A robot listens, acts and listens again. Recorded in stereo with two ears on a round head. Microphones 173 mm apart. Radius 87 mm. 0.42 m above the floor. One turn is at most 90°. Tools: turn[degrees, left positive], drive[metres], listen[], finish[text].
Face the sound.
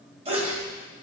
Thought: The sneeze: about 35° right or 145° right.
Action: turn[-35]
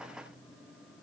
Action: listen[]
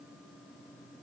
Action: finish[I heard a sneeze, but can't make it out now. It was about straight ahead or 110° right.]